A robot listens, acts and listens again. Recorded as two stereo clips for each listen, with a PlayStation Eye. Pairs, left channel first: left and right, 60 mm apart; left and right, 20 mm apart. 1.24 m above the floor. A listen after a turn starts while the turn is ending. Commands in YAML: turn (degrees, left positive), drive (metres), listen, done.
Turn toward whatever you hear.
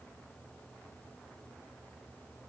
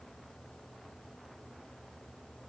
listen: true
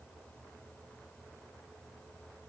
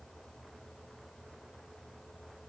listen: true
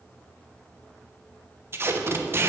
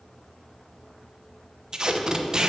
turn: -40
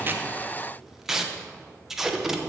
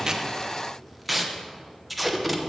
done: "Found it: tape being pulled, straight ahead, under 1 m away."